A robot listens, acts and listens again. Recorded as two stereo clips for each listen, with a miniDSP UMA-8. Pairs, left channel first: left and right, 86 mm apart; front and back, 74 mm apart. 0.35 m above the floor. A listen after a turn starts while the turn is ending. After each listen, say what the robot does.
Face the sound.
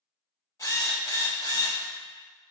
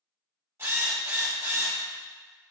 Turn 135° left.
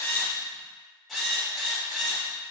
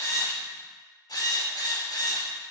Facing the drill, under 1 m away.